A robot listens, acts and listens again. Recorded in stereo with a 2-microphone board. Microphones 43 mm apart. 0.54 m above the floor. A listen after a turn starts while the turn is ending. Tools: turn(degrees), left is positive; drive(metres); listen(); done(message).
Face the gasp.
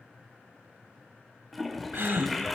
turn(degrees=-60)
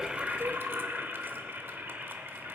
listen()
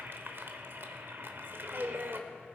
done("I heard a gasp, but can't make it out now. It was about straight ahead or 60° right.")